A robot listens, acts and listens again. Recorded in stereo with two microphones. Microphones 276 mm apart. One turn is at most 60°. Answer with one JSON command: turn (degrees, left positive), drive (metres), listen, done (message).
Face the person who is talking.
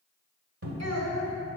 {"turn": -60}
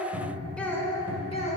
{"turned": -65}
{"turn": 25}
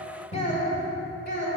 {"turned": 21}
{"turn": 40}
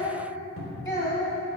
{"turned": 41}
{"turn": 15}
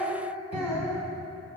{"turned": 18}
{"done": "Facing the child speaking, 2 to 4 m away."}